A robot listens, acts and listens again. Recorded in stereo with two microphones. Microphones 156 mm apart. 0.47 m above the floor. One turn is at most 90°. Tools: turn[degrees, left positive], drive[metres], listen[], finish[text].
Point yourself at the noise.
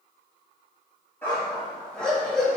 Action: turn[30]
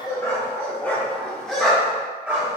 Action: turn[-30]
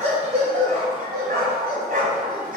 Thought: So it is at 115° right.
Action: turn[-90]
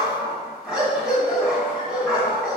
Action: finish[Facing the dog barking.]